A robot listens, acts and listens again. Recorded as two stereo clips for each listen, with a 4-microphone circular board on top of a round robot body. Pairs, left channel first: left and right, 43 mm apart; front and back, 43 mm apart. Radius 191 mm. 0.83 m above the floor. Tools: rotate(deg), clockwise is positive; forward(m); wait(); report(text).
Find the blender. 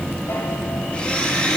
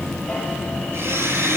rotate(-155)
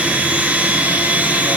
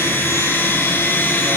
rotate(35)
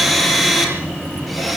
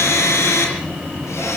report("Facing the blender.")